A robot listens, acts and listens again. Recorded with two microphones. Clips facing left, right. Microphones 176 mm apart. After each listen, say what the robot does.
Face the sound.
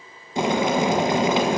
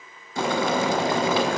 Turn 20° left.
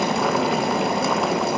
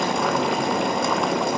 Facing the boiling, under 1 m away.